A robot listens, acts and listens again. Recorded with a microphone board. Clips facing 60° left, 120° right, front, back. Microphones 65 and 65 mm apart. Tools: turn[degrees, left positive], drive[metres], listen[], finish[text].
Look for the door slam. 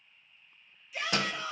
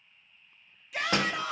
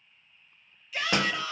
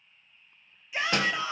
Thought: The door slam: 65° right.
Action: turn[-65]
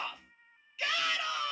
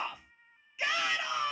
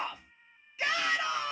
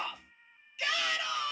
Action: finish[I heard a door slam from this way, but can't make it out now.]